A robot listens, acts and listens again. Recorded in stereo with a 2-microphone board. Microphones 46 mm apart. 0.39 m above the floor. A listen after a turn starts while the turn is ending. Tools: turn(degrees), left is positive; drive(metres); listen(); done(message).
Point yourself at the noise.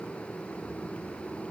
listen()
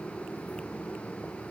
listen()
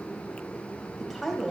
turn(degrees=30)
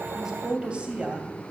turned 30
turn(degrees=-30)
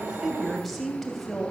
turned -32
done("Found it: a woman speaking, straight ahead.")